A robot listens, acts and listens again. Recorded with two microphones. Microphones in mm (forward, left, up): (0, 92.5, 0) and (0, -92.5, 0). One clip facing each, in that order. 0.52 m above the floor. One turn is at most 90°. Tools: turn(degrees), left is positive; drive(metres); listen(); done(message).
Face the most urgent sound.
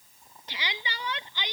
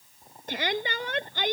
turn(degrees=-50)
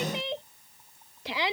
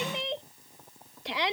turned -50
done("Found it: a shout, straight ahead.")